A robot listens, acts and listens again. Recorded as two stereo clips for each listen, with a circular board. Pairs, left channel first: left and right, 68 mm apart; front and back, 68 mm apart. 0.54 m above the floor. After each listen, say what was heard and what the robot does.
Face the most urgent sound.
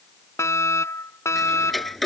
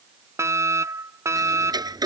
The fire alarm: 135° left. Turn 135° left.
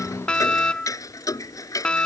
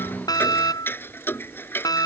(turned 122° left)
The fire alarm is now 15° left. Turn 15° left.
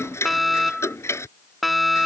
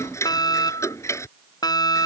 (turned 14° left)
Found it: a fire alarm, straight ahead.